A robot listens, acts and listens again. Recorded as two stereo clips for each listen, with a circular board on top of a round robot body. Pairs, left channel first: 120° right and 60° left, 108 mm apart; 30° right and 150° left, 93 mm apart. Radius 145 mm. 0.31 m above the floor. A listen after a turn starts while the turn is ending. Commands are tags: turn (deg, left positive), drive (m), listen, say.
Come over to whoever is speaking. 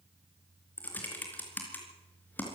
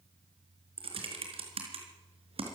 <listen/>
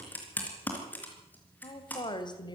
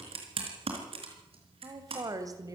<turn deg="-160"/>
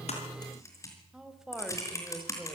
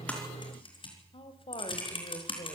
<turn deg="-25"/>
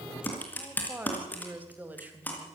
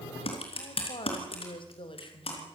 <turn deg="-15"/>
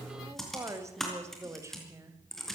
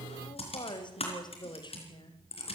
<drive m="1.0"/>
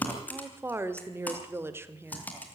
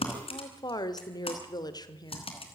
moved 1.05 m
<drive m="1.0"/>
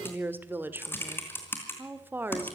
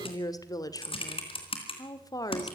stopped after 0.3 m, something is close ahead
<say>I am next to the woman speaking.</say>